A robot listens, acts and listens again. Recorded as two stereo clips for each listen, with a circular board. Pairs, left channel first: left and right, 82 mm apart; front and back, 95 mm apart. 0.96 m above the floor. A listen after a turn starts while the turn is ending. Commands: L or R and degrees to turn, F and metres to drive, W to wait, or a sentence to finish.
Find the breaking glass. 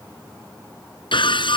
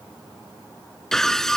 L85
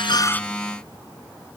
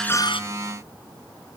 Facing where the breaking glass came from. I can't hear it now.